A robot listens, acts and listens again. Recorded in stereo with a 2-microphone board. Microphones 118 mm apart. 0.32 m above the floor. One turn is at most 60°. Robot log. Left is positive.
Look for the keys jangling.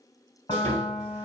cmd idle
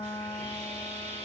cmd idle
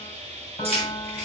note: The keys jangling: about 60° right or 120° right.
cmd yaw -60
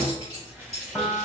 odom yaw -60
note: So it is at 60° right.
cmd yaw -60
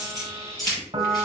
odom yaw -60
end: Facing the keys jangling.